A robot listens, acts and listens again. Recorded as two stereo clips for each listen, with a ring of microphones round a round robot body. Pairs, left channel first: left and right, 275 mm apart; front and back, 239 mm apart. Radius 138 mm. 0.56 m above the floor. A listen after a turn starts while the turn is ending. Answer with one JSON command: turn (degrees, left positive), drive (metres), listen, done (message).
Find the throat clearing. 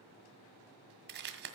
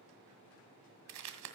{"listen": true}
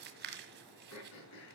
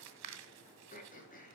{"turn": 55}
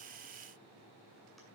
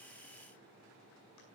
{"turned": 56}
{"listen": true}
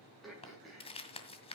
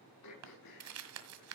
{"done": "Found it: throat clearing, straight ahead, over 4 m away."}